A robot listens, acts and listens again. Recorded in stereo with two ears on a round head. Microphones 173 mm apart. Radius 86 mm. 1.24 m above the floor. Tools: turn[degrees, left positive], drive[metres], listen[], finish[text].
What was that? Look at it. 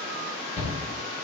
Thought: The shout: about 30° left or 150° left.
Action: turn[30]
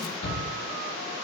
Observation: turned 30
Thought: So it is at 120° left.
Action: turn[120]
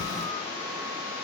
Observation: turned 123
Action: listen[]
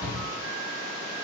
Action: finish[Found it: a shout, straight ahead, 1 to 2 m away.]